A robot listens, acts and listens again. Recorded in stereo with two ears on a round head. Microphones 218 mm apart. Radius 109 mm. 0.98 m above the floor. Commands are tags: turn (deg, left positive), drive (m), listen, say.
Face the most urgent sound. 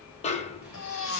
<turn deg="55"/>
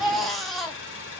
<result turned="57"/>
<say>Facing the baby crying.</say>